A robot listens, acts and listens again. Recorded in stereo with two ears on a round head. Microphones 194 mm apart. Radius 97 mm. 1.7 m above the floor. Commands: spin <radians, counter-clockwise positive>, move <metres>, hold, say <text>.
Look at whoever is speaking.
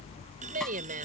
spin -0.70
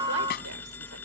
hold
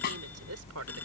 hold
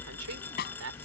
spin -1.92
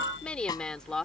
say Found it: a woman speaking, straight ahead.